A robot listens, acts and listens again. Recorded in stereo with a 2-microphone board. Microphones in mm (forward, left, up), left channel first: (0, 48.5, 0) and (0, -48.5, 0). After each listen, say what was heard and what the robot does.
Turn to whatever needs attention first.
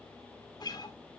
Keep listening.
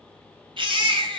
The baby crying: about 55° right or 125° right. Turn 55° right.
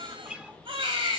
So it is at 65° right. Turn 65° right.
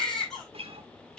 Found it: a baby crying, straight ahead.